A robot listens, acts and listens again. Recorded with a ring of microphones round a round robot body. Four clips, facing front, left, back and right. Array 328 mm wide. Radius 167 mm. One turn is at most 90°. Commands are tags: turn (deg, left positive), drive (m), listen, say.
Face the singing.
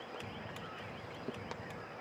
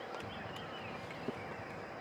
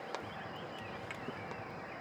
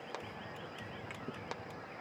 <listen/>
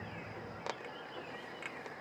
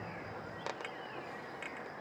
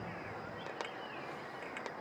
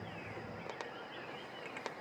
<listen/>
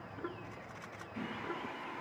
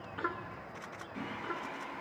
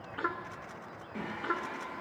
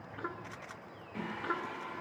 <turn deg="-90"/>
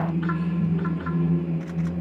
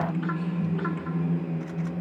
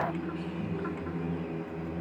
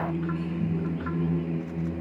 <turn deg="-60"/>
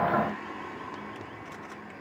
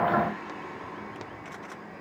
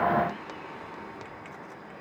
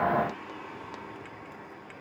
<turn deg="15"/>
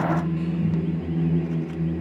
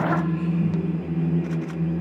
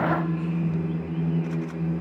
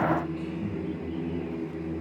<say>Found it: singing, straight ahead.</say>